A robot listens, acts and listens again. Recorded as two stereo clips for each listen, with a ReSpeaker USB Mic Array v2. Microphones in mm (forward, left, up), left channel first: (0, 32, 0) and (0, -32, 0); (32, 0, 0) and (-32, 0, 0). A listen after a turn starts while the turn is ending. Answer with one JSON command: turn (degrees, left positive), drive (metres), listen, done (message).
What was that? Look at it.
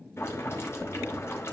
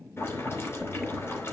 {"turn": 45}
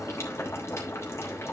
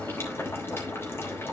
{"turn": 50}
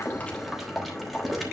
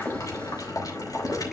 {"done": "Found it: boiling, straight ahead, 2 to 4 m away."}